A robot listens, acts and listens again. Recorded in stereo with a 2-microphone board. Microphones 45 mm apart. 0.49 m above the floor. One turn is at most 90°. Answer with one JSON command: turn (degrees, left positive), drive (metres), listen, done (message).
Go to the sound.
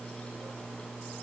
{"listen": true}
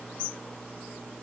{"listen": true}
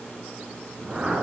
{"turn": -20}
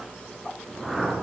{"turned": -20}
{"drive": 1.0}
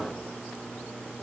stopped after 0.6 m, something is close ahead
{"turn": -10}
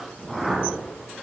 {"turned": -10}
{"done": "Blocked. The whoosh is further on, straight ahead."}